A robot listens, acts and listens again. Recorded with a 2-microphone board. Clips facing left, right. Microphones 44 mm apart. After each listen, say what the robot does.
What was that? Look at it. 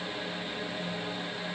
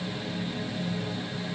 Keep listening.
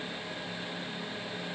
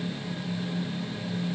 Keep listening.
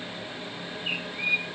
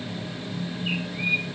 Turn 30° left.
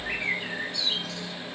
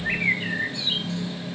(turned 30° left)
Turn 30° right.
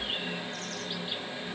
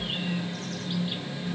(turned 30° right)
Keep listening.
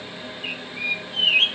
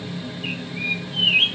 Facing the bird, 1 to 2 m away.